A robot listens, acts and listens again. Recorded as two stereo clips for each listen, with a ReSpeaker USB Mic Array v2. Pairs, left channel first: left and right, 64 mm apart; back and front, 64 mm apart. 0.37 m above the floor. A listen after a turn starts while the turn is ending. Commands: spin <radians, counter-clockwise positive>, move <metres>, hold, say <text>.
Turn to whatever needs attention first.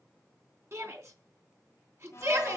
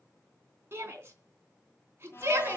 spin -0.87
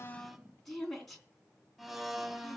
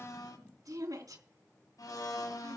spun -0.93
say Facing the shout, 2 to 4 m away.